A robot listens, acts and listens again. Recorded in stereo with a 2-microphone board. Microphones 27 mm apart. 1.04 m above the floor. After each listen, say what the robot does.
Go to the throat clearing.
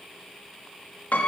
Keep listening.
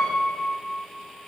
Keep listening.
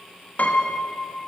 I can't make out throat clearing to turn to.